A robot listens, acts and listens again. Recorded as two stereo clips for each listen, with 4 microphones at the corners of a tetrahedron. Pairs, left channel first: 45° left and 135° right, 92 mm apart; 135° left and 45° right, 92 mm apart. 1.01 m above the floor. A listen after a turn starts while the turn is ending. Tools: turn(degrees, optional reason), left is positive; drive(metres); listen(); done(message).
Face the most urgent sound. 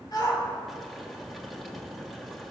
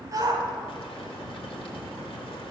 done("Found it: a shout, straight ahead, 2 to 4 m away.")